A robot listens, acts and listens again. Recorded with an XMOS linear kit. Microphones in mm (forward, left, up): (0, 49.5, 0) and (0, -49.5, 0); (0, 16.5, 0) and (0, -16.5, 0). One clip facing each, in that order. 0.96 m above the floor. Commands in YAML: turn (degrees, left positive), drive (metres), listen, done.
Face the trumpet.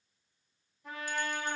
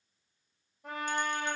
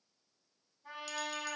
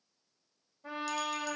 turn: -75
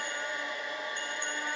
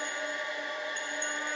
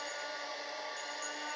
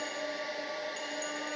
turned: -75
listen: true
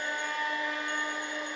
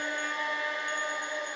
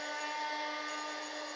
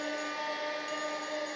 done: "Facing the trumpet."